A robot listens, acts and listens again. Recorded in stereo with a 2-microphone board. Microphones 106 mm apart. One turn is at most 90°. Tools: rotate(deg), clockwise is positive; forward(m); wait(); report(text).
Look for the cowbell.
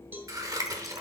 rotate(20)
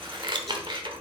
wait()
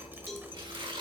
report("Facing the cowbell.")